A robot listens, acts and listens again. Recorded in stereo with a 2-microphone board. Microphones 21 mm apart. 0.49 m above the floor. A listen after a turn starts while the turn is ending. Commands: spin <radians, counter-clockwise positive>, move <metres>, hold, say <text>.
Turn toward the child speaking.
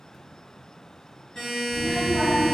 spin -0.79
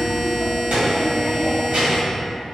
spin -2.09
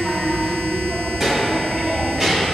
spin -0.35
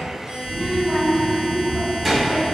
say Found it: a child speaking, straight ahead, 2 to 4 m away.